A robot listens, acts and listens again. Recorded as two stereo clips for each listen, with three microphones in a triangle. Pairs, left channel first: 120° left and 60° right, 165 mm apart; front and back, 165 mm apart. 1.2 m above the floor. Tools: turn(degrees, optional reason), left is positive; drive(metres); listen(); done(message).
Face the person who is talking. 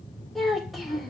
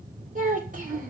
turn(degrees=-150, reason="The child speaking: 150° right.")
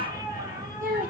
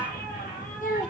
turn(degrees=-30, reason="The child speaking is now 30° right.")
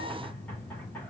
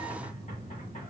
listen()
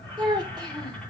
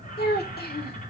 done("Found it: a child speaking, straight ahead.")